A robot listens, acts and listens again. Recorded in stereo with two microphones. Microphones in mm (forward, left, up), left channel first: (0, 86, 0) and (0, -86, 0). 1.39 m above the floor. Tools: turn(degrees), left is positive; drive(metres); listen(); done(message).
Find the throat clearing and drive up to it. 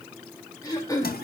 turn(degrees=20)
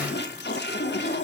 listen()
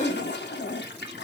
turn(degrees=140)
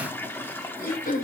turn(degrees=55)
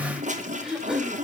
drive(metres=1.0)
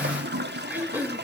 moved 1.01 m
turn(degrees=-10)
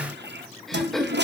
drive(metres=1.0)
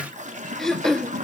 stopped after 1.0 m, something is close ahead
done("Arrived at the throat clearing, straight ahead.")